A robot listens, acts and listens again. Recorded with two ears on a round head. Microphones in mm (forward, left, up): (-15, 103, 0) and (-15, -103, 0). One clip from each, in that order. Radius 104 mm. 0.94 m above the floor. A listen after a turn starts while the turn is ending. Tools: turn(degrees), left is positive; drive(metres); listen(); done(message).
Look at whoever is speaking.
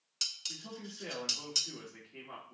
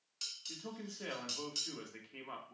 turn(degrees=-50)
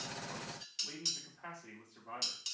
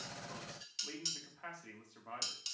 turn(degrees=-80)
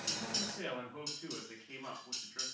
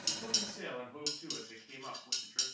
turn(degrees=-10)
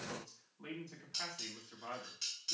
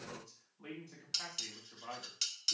done("Facing the man speaking, 2 to 4 m away.")